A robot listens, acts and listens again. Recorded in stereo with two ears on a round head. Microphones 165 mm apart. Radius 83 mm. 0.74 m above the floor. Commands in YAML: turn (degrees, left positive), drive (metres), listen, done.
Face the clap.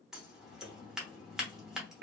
listen: true
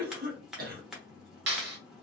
turn: -70
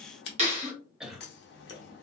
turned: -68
turn: -40
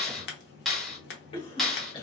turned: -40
done: "Facing the clap, 1 to 2 m away."